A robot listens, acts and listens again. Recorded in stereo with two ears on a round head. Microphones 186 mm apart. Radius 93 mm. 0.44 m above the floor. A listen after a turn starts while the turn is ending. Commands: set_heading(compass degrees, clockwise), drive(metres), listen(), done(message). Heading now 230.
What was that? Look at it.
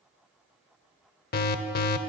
set_heading(185)
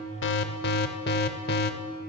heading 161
set_heading(101)
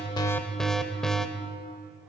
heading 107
done("Found it: an alarm, straight ahead, under 1 m away.")